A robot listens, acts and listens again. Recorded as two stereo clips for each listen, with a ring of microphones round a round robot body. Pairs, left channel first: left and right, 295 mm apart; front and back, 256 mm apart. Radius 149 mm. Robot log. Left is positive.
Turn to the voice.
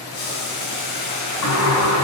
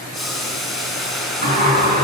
cmd idle
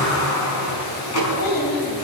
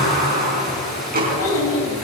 note: The child speaking: 30° left.
cmd yaw +30
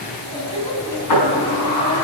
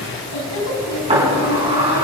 note: The child speaking is now 15° left.
cmd yaw +15
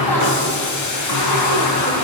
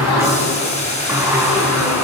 cmd idle
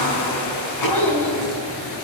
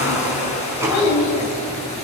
end: Facing the child speaking.